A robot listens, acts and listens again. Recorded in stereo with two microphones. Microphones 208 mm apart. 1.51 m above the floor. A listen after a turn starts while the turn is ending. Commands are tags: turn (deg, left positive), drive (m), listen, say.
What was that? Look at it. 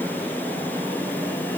<listen/>
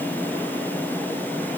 <listen/>
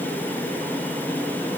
<say>I can't make out anything to turn to.</say>